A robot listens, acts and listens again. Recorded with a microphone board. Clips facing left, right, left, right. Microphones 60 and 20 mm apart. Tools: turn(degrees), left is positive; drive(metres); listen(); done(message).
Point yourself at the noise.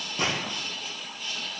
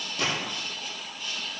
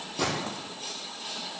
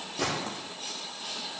turn(degrees=25)
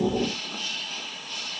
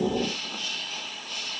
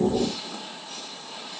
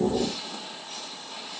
listen()
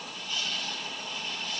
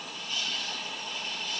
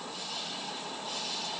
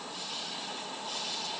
done("I heard a gunshot, but can't make it out now. It was about straight ahead or 130° left.")